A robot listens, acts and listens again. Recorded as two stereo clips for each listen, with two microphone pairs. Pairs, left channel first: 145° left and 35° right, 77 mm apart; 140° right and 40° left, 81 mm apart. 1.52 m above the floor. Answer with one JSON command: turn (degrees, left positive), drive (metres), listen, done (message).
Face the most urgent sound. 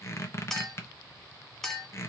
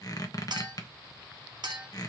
{"listen": true}
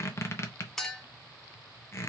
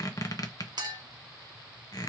{"listen": true}
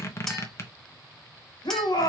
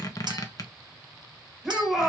{"turn": 125}
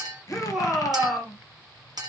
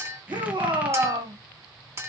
{"turn": 50}
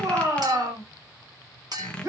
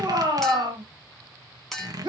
{"turn": 10}
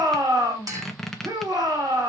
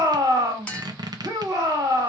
{"done": "Found it: a shout, straight ahead, 2 to 4 m away."}